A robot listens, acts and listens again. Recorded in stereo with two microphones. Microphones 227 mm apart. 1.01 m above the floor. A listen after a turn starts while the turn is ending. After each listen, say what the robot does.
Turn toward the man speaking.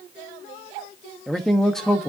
Turn 30° left.
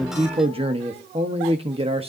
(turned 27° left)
Turn 25° right.
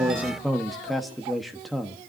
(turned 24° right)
Found it: a man speaking, straight ahead.